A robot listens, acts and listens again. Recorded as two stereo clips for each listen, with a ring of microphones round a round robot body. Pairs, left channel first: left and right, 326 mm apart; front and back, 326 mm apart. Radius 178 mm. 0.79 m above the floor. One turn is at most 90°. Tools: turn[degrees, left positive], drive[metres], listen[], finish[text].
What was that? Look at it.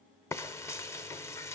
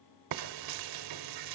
Thought: The frying: 170° left.
Action: turn[90]
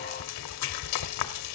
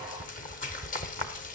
Thought: The frying is now 65° left.
Action: turn[65]
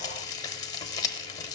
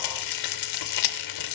Thought: The frying is now 10° left.
Action: turn[10]
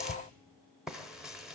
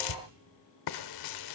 Action: finish[Found it: frying, straight ahead, under 1 m away.]